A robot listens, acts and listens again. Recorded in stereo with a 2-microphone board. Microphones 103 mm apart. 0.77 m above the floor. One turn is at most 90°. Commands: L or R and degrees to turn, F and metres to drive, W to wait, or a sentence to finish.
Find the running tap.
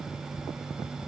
W
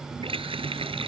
R60
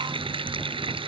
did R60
R55
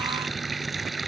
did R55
Facing the running tap.